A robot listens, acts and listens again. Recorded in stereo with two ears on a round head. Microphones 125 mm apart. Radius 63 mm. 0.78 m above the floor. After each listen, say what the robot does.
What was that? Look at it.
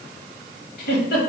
Turn 75° left.
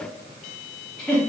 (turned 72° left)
Found it: a giggle, straight ahead.